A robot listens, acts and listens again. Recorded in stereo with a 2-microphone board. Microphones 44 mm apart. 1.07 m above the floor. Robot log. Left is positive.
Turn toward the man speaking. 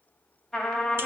cmd idle
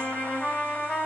cmd idle
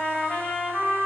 end: I can't make out a man speaking, only a trumpet.